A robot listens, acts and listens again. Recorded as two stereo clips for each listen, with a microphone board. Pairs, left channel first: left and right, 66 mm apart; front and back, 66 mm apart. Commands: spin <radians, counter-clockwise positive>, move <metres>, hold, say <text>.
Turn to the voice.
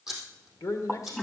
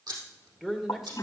spin 1.66
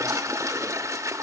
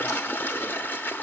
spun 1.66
hold
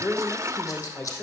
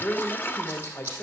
spin 0.52
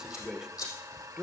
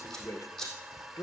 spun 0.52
spin -0.17
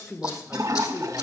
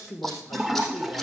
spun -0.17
say Facing the man speaking, 1 to 2 m away.